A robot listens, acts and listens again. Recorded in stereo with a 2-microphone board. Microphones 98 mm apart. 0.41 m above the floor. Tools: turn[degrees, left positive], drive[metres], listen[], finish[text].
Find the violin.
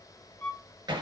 Thought: The violin: about 20° left or 160° left.
Action: turn[20]
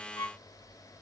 Thought: So it is at 140° left.
Action: turn[140]
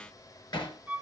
Thought: The violin is now 20° right.
Action: turn[-20]
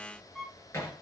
Action: finish[Facing the violin, 1 to 2 m away.]